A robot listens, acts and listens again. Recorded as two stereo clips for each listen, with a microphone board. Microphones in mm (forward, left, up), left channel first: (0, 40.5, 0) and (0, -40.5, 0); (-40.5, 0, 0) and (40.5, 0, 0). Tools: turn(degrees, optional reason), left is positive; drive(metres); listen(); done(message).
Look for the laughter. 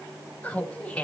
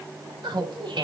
turn(degrees=15, reason="The laughter: 15° left.")
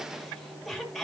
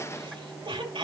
done("Found it: laughter, straight ahead.")